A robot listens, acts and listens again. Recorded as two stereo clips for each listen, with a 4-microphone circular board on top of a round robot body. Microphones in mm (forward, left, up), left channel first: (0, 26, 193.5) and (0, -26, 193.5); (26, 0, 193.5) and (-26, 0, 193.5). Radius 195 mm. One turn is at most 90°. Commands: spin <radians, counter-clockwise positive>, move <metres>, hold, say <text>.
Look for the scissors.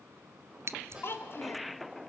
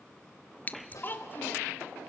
spin -1.05
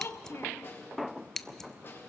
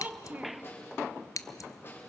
spin 0.17
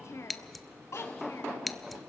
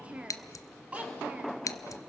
say Facing the scissors.